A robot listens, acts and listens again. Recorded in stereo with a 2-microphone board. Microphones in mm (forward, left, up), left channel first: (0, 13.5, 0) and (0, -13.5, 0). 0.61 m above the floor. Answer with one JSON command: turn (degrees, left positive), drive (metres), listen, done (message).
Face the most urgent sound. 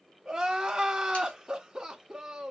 {"turn": -20}
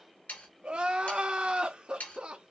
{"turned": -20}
{"turn": -135}
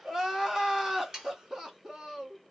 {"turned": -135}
{"turn": -15}
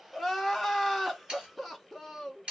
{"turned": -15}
{"done": "Found it: crying, straight ahead."}